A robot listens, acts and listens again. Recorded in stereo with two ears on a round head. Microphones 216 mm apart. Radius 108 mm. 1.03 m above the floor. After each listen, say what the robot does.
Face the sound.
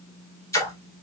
Turn 30° left.
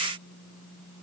Keep listening.
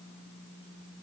I heard a splash, but can't make it out now. It was about 15° right or 135° left.